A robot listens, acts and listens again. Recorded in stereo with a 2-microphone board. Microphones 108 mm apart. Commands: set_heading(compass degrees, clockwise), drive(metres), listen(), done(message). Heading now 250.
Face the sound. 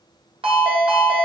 set_heading(315)
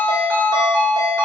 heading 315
set_heading(5)
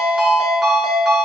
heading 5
done("Facing the ringtone, 1 to 2 m away.")